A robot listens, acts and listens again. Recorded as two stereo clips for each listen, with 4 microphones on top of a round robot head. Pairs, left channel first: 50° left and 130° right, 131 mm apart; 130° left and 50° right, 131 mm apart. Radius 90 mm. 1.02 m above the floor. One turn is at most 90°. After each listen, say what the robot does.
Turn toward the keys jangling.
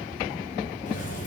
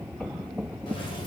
Turn 70° left.
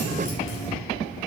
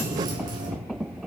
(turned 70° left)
Turn 10° left.
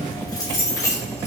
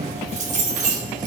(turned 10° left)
Turn 20° right.
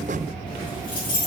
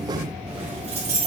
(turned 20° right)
Turn 10° right.
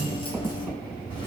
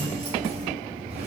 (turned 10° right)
Facing the keys jangling.